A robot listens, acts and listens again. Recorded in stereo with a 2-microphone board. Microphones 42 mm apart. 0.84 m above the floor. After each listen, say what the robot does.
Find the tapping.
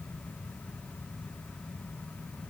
Keep listening.
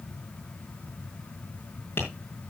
Turn 55° left.
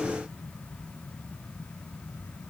Keep listening.
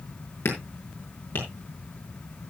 Turn 70° left.
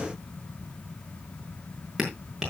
Found it: tapping, straight ahead.